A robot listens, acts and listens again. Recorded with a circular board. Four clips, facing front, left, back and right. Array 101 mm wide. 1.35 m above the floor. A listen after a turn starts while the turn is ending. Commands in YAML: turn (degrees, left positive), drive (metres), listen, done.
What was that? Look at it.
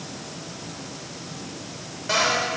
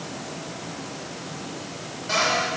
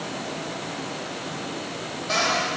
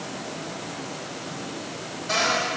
turn: 10
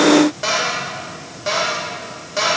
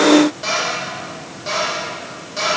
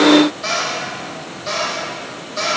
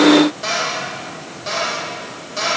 done: "Facing the cupboard door."